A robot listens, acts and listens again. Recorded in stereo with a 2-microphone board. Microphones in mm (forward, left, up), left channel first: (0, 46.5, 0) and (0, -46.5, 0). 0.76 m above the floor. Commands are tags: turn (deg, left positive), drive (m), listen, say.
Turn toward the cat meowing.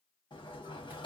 <listen/>
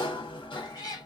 <turn deg="40"/>
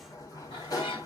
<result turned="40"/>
<turn deg="100"/>
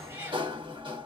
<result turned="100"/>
<turn deg="-25"/>
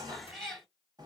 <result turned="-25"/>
<say>Facing the cat meowing.</say>